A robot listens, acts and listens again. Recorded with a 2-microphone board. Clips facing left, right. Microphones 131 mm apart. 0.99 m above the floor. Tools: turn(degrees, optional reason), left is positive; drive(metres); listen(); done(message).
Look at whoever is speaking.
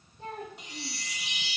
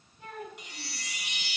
turn(degrees=35, reason="The child speaking: about 35° left or 145° left.")
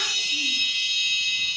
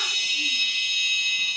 listen()
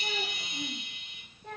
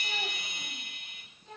turn(degrees=105, reason="So it is at 105° left.")
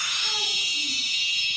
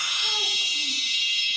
listen()
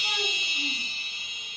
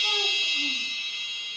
listen()
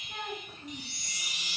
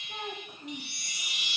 turn(degrees=-15, reason="The child speaking is now 15° right.")
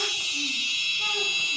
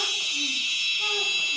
listen()
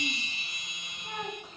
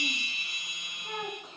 done("Found it: a child speaking, straight ahead.")